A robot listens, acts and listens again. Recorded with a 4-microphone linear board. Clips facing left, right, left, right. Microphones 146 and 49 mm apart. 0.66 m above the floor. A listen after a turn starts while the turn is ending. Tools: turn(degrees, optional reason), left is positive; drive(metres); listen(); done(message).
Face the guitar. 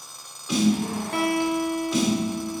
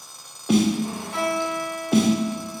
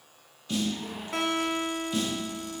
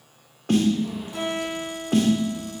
turn(degrees=75, reason="The guitar: about 75° left or 105° left.")
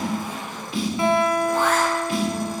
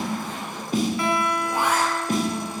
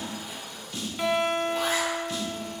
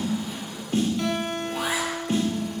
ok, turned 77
turn(degrees=25, reason="So it is at 25° left.")
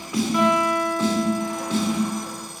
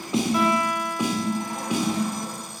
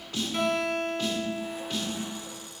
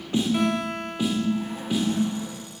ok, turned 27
done("Found it: a guitar, straight ahead, 1 to 2 m away.")